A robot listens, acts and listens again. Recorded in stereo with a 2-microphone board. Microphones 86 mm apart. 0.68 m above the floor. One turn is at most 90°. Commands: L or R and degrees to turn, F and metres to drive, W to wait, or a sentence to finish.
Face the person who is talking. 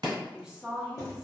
R30
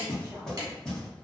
W
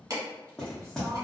W
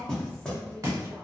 I heard a woman speaking, but can't make it out now. It was about 25° left or 145° right.